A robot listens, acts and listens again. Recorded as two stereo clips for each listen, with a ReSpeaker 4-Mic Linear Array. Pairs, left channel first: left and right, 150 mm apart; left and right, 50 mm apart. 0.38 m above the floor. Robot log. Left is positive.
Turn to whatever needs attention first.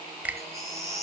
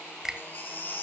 note: The baby crying: about 45° left or 135° left.
cmd yaw +45
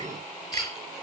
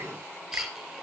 end: Found it: a baby crying, straight ahead, 2 to 4 m away.